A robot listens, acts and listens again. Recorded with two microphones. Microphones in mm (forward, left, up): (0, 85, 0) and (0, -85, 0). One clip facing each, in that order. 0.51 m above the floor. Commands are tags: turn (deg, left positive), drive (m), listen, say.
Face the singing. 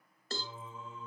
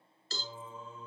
<turn deg="-25"/>
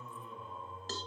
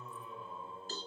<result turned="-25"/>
<say>Found it: singing, straight ahead.</say>